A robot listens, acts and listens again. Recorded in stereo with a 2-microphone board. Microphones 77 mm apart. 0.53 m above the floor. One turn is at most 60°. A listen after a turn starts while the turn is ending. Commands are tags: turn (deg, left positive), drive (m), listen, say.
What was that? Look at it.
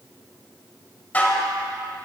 <turn deg="20"/>
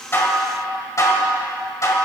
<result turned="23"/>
<turn deg="60"/>
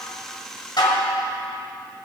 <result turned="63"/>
<turn deg="60"/>
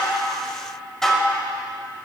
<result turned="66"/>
<say>Facing the dishes clattering.</say>